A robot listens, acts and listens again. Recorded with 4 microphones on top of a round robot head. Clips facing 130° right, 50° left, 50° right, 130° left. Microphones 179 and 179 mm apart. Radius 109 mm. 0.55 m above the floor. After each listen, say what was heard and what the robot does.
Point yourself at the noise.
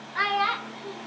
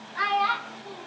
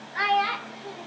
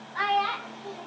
The child speaking: 130° right. Turn 130° right.
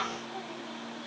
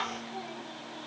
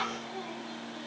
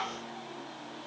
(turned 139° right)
The child speaking is now 25° right. Turn 25° right.
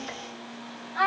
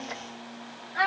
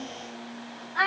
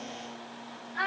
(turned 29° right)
The child speaking is now 15° right. Turn 15° right.
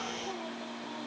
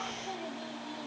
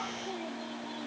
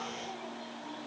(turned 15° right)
Keep listening.
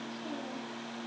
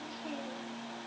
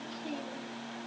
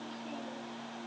Keep listening.
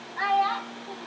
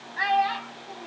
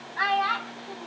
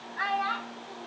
The child speaking is now 10° right. Turn 10° right.
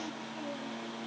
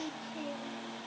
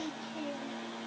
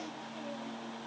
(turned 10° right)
Keep listening.
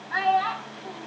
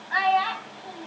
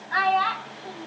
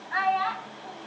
Found it: a child speaking, straight ahead.